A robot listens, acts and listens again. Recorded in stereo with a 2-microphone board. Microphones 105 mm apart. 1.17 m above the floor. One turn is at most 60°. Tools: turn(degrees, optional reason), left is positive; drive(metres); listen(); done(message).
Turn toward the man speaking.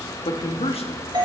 turn(degrees=60, reason="The man speaking: about 65° left or 115° left.")
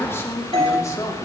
turn(degrees=30, reason="So it is at 30° left.")
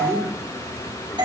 turn(degrees=10, reason="The man speaking is now 10° left.")
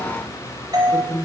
turn(degrees=10, reason="The man speaking is now 10° left.")
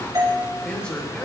turn(degrees=10, reason="The man speaking is now 10° left.")
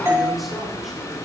listen()
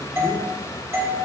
listen()
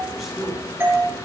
done("Found it: a man speaking, straight ahead, 2 to 4 m away.")